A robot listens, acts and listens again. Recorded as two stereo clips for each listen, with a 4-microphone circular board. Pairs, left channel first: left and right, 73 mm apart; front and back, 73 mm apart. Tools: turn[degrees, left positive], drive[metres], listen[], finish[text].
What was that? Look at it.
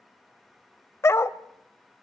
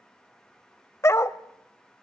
Thought: The dog barking: 45° left.
Action: turn[45]
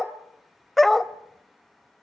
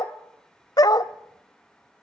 Action: finish[Facing the dog barking.]